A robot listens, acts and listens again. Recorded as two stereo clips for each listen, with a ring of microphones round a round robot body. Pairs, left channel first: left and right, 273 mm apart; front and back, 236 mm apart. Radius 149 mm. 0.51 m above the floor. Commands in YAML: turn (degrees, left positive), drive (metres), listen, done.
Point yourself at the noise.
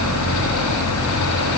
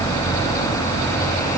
listen: true
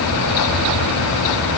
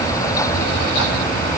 listen: true
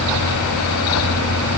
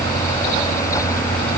done: "I can't make out anything."